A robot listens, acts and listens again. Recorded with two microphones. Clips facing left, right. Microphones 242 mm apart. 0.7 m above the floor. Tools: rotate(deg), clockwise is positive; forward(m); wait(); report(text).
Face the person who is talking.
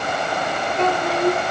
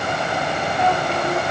rotate(-90)
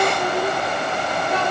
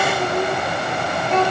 rotate(-10)
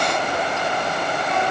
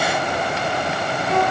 wait()
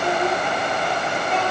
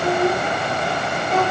report("Found it: a child speaking, straight ahead, over 4 m away.")